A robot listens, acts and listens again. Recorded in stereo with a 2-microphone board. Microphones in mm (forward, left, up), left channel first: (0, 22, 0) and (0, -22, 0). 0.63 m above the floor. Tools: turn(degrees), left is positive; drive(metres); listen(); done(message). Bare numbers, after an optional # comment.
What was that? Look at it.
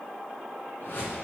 # The whoosh: about 60° left or 120° left.
turn(60)
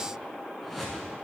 done("Facing the whoosh.")